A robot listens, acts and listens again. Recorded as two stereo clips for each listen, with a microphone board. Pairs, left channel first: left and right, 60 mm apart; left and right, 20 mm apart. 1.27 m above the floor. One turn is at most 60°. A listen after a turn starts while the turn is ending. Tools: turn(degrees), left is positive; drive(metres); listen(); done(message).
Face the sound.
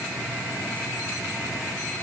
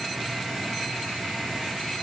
listen()
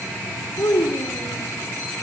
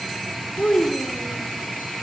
turn(degrees=60)
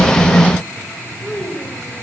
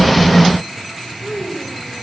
done("Facing the child speaking.")